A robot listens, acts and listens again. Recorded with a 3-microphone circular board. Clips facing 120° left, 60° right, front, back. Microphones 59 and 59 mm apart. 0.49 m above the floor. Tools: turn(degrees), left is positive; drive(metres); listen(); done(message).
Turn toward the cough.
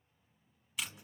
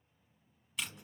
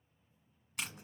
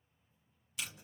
listen()
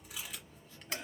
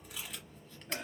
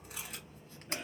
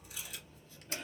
turn(degrees=-75)
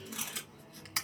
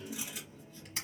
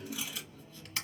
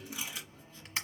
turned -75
done("Facing the cough, 1 to 2 m away.")